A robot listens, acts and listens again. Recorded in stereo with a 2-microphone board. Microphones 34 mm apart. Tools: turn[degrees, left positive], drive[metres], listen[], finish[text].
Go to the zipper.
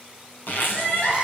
Thought: The zipper: about 75° left or 105° left.
Action: turn[75]
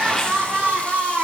Action: listen[]
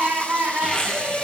Thought: So it is at 25° left.
Action: turn[25]
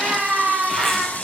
Action: listen[]
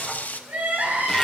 Action: listen[]
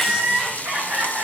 Action: finish[Facing where the zipper came from. I can't hear it now. I did not reach it.]